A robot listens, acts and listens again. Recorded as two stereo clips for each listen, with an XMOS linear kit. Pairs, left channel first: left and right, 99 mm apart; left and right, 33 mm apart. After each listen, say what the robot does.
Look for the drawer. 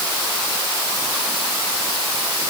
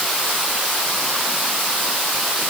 Keep listening.
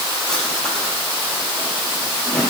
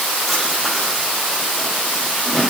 Turn 30° left.
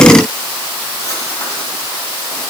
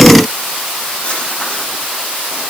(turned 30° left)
Keep listening.
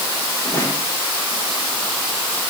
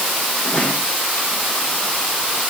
Keep listening.
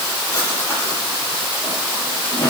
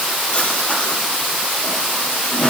Turn 145° left.
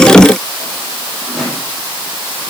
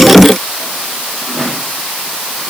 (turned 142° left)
Found it: a drawer, straight ahead, over 4 m away.